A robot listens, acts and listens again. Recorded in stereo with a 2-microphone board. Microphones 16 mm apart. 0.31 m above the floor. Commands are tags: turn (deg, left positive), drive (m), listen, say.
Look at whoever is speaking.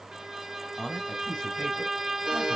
<turn deg="60"/>
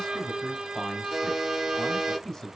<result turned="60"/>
<turn deg="35"/>
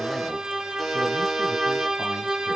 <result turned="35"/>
<listen/>
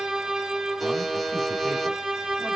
<listen/>
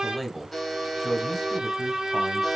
<say>Found it: a man speaking, straight ahead.</say>